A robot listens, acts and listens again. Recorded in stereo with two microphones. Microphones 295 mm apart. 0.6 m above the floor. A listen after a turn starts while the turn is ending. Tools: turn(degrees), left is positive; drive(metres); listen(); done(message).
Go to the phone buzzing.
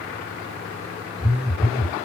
turn(degrees=-30)
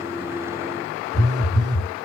turn(degrees=-145)
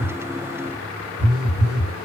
turn(degrees=-55)
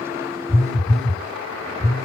drive(metres=1.0)
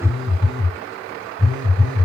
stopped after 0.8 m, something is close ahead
done("Blocked. The phone buzzing is further on, straight ahead.")